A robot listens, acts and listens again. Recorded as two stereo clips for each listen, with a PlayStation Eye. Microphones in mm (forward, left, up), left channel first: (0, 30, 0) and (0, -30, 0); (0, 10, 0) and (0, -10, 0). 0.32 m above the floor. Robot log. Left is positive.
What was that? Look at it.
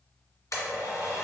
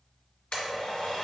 note: The blender: about 60° left or 120° left.
cmd yaw +60
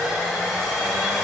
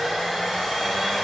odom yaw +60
end: Found it: a blender, straight ahead.